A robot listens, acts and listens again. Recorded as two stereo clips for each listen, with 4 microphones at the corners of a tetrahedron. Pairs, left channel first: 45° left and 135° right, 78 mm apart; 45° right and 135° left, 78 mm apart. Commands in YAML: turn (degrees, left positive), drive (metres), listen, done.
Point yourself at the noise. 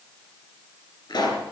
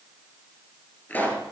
turn: 25
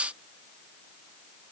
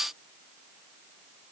done: "I heard a pop from this way, but can't make it out now."